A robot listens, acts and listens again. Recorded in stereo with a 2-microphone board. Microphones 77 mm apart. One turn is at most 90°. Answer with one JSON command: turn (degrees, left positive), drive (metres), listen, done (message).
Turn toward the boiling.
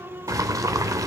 {"turn": -45}
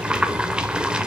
{"turn": -15}
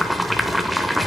{"done": "Facing the boiling."}